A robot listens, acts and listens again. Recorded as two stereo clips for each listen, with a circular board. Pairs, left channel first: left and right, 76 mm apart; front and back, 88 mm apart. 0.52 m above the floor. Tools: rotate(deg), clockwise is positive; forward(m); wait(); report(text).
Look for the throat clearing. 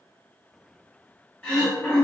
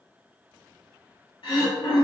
rotate(-10)
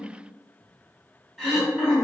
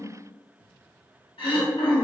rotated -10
report("Found it: throat clearing, straight ahead, 1 to 2 m away.")